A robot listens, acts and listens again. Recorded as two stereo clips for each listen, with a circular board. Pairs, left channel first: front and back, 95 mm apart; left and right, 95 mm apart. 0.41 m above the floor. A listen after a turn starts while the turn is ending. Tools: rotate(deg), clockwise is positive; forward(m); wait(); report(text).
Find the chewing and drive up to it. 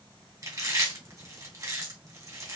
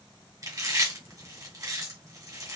rotate(135)
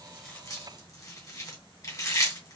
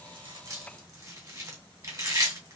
rotate(45)
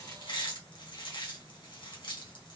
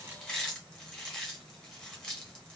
forward(1.0)
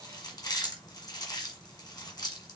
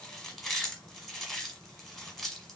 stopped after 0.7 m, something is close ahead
report("I am next to the chewing.")